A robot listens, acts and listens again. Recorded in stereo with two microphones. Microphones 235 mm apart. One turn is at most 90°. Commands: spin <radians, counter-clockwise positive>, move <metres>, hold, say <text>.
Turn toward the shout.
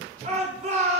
spin -0.52
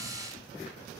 hold
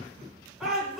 say Facing the shout, over 4 m away.